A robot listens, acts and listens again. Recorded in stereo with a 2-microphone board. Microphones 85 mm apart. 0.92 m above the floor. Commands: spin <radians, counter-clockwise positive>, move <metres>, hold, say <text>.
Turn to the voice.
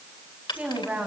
spin -0.35
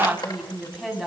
say Facing the woman speaking.